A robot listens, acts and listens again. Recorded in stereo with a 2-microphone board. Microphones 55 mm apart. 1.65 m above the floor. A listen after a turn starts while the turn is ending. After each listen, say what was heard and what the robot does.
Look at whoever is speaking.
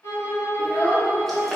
The child speaking: about 35° left or 145° left. Turn 35° left.
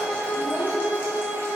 Keep listening.
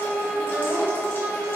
Keep listening.
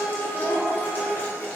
So it is at 105° left. Turn 105° left.
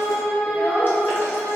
The child speaking is now 10° left. Turn 10° left.
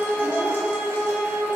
Keep listening.
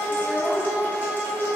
Facing the child speaking, 1 to 2 m away.